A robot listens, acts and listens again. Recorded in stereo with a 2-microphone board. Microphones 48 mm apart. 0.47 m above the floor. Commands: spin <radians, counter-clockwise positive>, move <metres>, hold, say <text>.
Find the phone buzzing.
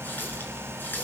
hold
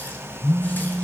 spin 1.57
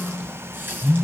spin -0.17
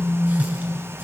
say Facing the phone buzzing.